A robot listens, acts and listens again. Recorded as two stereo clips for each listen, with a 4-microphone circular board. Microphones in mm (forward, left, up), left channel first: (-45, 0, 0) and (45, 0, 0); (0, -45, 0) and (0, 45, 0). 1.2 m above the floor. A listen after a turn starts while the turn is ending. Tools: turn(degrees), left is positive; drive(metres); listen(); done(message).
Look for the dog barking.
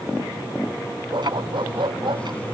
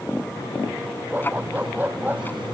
turn(degrees=20)
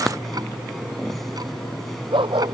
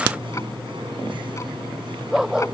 turn(degrees=10)
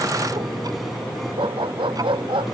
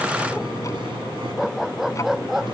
done("Facing the dog barking.")